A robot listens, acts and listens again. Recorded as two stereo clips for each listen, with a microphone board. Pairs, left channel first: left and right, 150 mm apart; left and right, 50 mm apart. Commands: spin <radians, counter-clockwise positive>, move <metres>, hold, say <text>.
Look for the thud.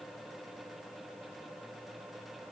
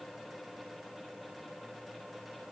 hold
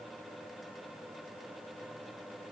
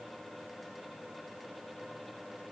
hold
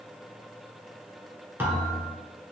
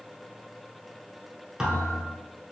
spin -0.52
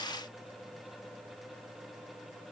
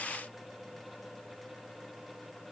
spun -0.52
hold
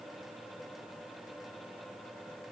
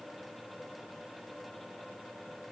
say I heard a thud, but can't make it out now. It was about 15° left or 135° right.